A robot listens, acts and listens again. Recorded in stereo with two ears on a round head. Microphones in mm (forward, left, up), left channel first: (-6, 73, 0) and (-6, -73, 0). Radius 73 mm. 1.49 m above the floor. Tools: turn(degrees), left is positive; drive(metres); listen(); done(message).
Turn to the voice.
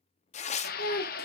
turn(degrees=60)
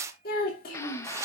turn(degrees=55)
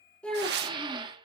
done("Found it: a child speaking, straight ahead, 2 to 4 m away.")